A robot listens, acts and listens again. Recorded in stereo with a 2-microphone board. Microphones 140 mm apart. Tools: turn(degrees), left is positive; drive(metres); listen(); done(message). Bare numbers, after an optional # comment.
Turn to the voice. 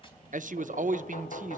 # The man speaking: about 65° right or 115° right.
turn(-65)
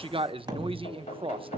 # So it is at 40° right.
turn(-40)
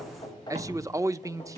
# The man speaking is now 25° right.
turn(-25)
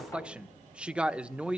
# The man speaking is now 10° right.
turn(-10)
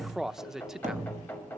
done("Facing the man speaking.")